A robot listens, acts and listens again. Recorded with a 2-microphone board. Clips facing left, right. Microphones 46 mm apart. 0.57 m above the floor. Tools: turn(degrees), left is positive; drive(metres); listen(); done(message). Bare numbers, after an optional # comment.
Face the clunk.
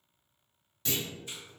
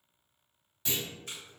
turn(-30)
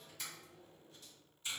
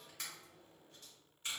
listen()
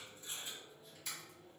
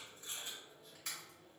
done("I heard a clunk, but can't make it out now. It was about 20° left or 140° right.")